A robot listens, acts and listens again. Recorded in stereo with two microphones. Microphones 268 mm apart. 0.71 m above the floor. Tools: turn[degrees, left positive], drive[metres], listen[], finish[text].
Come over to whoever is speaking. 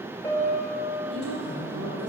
Thought: The woman speaking: about 65° right or 115° right.
Action: turn[-65]
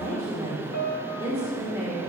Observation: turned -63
Thought: So it is at 25° right.
Action: turn[-25]
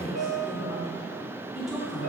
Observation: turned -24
Action: drive[1.0]
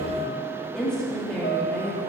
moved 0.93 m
Action: drive[1.0]
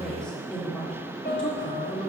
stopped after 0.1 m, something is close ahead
Action: finish[I am next to the woman speaking.]